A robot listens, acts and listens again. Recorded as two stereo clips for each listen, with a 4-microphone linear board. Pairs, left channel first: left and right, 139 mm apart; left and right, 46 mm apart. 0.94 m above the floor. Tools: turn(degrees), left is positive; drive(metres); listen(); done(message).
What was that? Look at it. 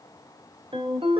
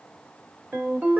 turn(degrees=-40)
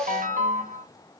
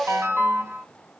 turn(degrees=-100)
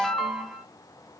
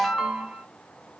done("Facing the ringtone, 1 to 2 m away.")